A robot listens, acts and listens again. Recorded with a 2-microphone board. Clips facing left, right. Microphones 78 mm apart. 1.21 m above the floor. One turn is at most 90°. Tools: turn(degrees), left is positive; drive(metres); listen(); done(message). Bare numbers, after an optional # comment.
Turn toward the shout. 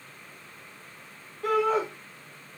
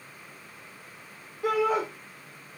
turn(-30)
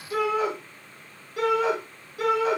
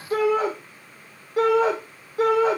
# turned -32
# So it is at 140° right.
turn(-90)
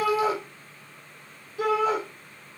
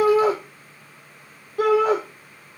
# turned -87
# The shout is now 55° right.
turn(-55)
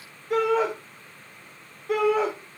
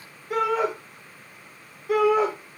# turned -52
done("Facing the shout, 1 to 2 m away.")